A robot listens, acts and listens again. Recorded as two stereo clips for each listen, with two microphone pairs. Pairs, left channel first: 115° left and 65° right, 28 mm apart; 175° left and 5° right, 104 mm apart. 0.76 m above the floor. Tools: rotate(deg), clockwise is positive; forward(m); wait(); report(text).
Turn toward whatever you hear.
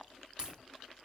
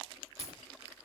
rotate(10)
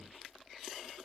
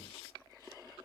report("I heard a crack from this way, but can't make it out now.")